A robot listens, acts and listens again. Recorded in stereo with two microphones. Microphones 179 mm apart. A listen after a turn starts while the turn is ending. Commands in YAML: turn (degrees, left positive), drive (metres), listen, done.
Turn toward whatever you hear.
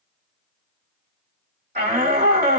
turn: -65
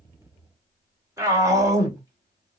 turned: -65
turn: -20
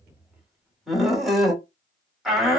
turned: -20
done: "Facing the shout."